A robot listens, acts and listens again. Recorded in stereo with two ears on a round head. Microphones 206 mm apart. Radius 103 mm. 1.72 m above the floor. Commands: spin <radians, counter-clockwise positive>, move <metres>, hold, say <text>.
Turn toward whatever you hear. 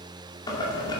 spin 0.35
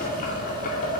spin 2.36
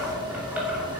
spin -0.17
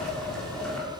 say Found it: boiling, straight ahead, 2 to 4 m away.